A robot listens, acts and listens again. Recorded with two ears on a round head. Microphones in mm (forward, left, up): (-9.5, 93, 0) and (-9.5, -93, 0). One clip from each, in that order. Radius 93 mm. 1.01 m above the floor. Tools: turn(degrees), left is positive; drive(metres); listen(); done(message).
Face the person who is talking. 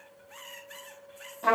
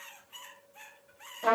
listen()
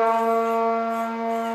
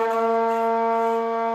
listen()
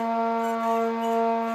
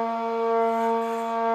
done("I can't make out anyone speaking to turn to.")